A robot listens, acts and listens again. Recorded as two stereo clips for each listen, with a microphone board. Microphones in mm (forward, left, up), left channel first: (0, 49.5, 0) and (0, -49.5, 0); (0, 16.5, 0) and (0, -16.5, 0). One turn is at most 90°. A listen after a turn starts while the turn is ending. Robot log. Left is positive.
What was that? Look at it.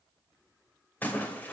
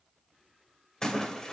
note: The splash: about 15° left or 165° left.
cmd yaw +15
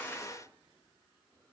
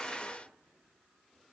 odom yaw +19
cmd idle
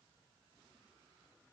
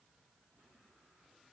end: I heard a splash, but can't make it out now. It was about straight ahead or 145° left.